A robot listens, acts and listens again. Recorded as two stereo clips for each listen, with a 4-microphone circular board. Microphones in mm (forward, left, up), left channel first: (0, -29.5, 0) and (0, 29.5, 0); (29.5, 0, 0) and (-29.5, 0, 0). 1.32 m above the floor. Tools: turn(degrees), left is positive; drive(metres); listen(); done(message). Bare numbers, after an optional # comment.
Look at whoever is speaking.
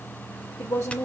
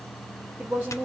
# The woman speaking: 120° right.
turn(-120)
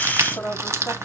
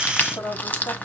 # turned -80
# The woman speaking is now 35° right.
turn(-35)
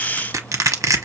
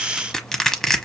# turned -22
# Nothing new. It was at 15° right.
turn(-15)
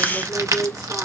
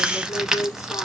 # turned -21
# The woman speaking is now 10° left.
turn(10)
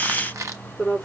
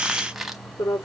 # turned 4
# The woman speaking is now 10° left.
turn(10)
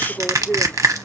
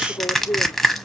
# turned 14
done("Found it: a woman speaking, straight ahead.")